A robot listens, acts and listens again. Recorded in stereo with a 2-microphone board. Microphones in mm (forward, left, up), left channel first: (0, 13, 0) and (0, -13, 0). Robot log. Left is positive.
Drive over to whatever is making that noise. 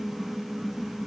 cmd idle
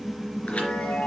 note: The chime: about 65° left or 115° left.
cmd yaw +65
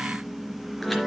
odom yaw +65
cmd fwd 1.0
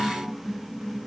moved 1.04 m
cmd idle
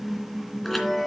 cmd fwd 1.0
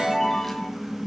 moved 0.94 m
note: The chime is now 10° left.
cmd yaw +10
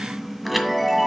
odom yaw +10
cmd fwd 1.0
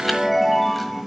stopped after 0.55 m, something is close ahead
end: I am next to the chime.